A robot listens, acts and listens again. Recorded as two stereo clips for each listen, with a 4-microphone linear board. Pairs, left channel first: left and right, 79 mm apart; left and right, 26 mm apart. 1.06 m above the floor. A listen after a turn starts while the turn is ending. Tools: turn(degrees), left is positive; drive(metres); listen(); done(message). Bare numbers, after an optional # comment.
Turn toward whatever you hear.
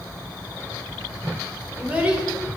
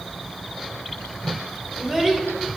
# The child speaking: about 15° right or 165° right.
turn(-15)
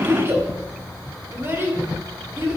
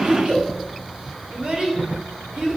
# So it is at 150° right.
turn(-150)
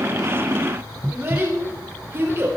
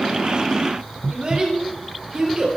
# The child speaking is now 30° right.
turn(-30)
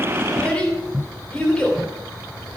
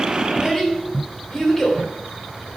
# The child speaking is now 15° left.
turn(15)
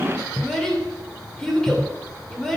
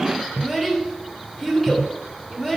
done("Found it: a child speaking, straight ahead.")